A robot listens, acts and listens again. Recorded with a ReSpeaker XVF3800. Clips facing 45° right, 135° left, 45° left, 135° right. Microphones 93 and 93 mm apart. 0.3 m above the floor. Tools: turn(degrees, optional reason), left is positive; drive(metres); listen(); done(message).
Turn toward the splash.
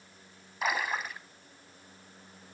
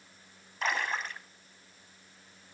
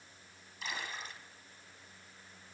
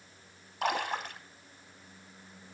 turn(degrees=-130, reason="The splash: 130° right.")
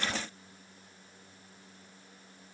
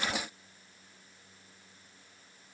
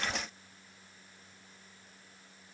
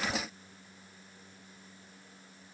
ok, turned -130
done("Facing where the splash came from. I can't hear it now.")